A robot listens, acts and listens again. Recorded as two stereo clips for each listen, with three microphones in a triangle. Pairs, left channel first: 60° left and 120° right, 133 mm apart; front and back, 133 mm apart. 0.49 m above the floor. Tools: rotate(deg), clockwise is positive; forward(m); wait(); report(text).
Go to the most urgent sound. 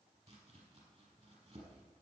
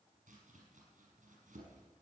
wait()
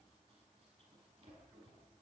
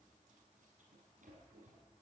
wait()
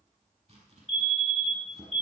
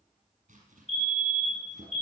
rotate(90)
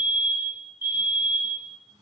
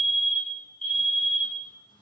rotate(-10)
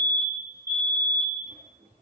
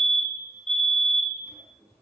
forward(1.0)
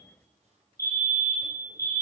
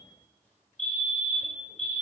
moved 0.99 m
forward(1.0)
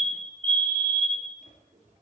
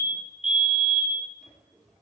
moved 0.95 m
rotate(10)
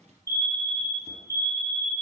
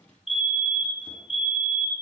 forward(1.0)
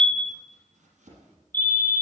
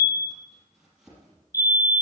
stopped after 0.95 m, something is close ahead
report("I am next to the fire alarm.")